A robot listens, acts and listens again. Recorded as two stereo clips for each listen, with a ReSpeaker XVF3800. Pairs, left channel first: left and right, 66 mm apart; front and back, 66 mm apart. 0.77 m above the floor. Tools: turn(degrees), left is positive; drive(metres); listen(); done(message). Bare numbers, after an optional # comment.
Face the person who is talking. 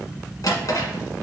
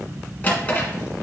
listen()
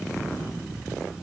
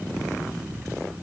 listen()
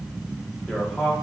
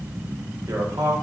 # The man speaking: 170° left.
turn(170)
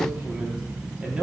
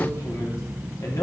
# The man speaking is now 20° right.
turn(-20)
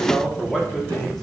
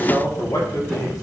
done("Facing the man speaking, 1 to 2 m away.")